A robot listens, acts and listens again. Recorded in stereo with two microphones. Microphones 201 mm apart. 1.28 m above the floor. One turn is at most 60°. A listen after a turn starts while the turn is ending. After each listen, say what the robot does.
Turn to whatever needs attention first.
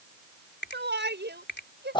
Turn 60° right.
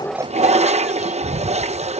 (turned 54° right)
Keep listening.
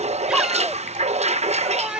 Facing the shout.